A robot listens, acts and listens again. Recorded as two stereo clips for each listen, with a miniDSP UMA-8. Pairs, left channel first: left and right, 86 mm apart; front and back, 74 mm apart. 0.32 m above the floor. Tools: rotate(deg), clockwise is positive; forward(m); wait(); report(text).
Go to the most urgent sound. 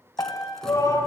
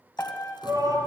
rotate(-145)
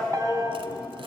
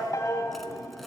rotate(-50)
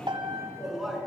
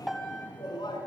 forward(1.0)
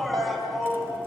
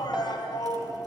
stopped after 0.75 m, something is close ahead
report("Blocked. The shout is further on, straight ahead.")